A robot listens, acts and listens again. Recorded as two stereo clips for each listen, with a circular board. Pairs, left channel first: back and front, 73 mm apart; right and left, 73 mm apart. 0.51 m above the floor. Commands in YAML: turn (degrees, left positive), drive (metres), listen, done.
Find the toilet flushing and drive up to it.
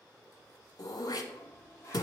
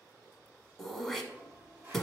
turn: 145
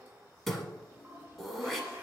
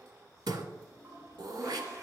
turn: 50
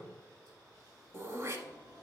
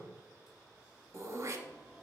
turn: 10
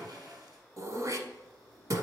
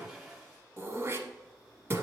drive: 1.0
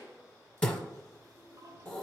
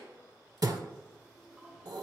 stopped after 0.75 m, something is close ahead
done: "Arrived at the toilet flushing, straight ahead."